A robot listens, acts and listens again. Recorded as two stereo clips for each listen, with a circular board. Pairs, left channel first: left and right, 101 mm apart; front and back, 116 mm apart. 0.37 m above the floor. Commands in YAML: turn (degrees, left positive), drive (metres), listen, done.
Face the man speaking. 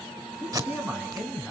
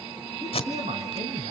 turn: -170
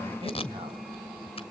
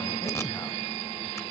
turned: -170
listen: true
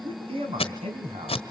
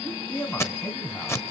turn: -80
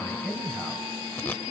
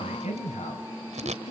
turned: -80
done: "Found it: a man speaking, straight ahead."